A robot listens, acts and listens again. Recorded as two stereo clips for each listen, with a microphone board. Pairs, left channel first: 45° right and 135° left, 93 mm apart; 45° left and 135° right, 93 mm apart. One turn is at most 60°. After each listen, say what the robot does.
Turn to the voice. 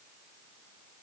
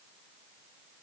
Keep listening.
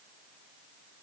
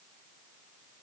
Keep listening.
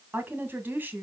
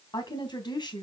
Turn 60° left.
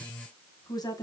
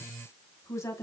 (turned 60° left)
Facing the woman speaking.